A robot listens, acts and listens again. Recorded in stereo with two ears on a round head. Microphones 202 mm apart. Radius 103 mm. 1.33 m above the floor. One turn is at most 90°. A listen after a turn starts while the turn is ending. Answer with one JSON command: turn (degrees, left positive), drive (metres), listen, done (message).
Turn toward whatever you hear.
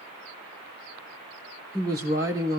{"turn": -30}
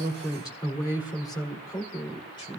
{"turn": 20}
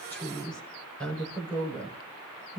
{"done": "Facing the woman speaking."}